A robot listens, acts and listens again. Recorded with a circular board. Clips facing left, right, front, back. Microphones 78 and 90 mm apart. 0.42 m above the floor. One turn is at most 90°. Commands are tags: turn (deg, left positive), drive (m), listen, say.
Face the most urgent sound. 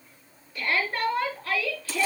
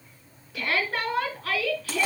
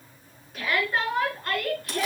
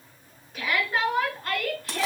<turn deg="-90"/>
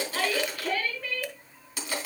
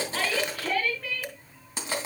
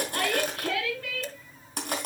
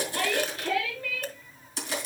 <say>Found it: a shout, straight ahead, over 4 m away.</say>